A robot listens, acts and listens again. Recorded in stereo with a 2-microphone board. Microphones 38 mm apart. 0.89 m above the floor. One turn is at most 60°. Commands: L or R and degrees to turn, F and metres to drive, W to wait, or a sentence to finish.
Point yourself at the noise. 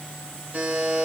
R45
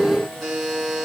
Facing the buzzer, over 4 m away.